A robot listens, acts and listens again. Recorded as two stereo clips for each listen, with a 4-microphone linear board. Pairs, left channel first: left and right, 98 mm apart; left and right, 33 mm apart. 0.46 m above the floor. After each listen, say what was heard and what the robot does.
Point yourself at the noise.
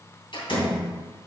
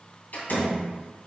The door slam: about 60° left or 120° left. Turn 60° left.
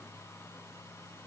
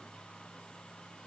Keep listening.
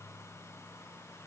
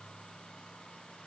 I heard a door slam, but can't make it out now. It was about straight ahead or 60° left.